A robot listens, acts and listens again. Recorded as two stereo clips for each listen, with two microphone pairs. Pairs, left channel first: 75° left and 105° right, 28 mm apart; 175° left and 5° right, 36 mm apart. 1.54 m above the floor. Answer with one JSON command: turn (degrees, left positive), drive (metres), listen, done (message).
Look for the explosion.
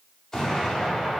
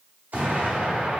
{"turn": 10}
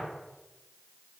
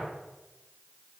{"done": "Facing where the explosion came from. I can't hear it now."}